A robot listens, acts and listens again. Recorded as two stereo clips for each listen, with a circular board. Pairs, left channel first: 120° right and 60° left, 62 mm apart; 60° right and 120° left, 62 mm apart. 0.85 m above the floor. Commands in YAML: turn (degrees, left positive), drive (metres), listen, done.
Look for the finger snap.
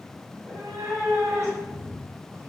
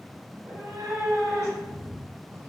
listen: true
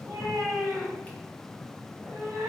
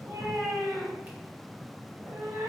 listen: true
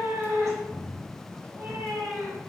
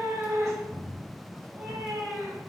done: "I can't make out a finger snap, only a cat meowing."